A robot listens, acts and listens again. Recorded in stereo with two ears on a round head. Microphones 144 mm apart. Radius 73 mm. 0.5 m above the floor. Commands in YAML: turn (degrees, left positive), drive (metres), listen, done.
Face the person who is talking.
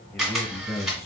turn: 15
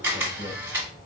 turn: 155
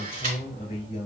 turn: 40
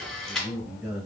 turn: -20
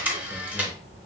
listen: true
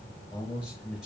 done: "Found it: a man speaking, straight ahead."